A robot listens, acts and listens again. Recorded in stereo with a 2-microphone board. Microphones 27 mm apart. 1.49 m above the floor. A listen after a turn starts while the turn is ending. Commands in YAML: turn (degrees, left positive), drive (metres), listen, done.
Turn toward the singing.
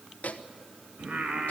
turn: -70
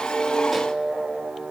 turn: -40
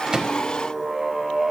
done: "Found it: singing, straight ahead, 2 to 4 m away."